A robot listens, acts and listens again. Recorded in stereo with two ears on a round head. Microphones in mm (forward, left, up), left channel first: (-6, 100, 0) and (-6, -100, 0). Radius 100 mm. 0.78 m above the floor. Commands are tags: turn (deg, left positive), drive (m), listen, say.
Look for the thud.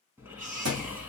<turn deg="-75"/>
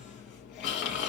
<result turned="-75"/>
<listen/>
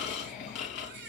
<say>I heard a thud, but can't make it out now. It was about straight ahead or 30° right.</say>